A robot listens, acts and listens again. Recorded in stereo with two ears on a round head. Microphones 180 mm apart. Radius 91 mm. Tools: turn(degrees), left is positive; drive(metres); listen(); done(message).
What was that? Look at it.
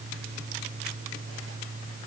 listen()
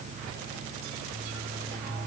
listen()
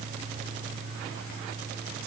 done("I can't make out anything.")